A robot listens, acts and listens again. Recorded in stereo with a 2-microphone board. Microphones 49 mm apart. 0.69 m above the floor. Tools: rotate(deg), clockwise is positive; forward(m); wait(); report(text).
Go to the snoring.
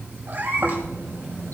rotate(90)
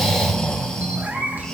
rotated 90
rotate(-15)
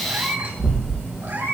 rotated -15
forward(1.0)
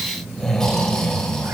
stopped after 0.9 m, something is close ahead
rotate(-10)
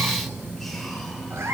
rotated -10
wait()
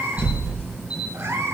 report("Something is in my way. I am facing the snoring but have not reached it.")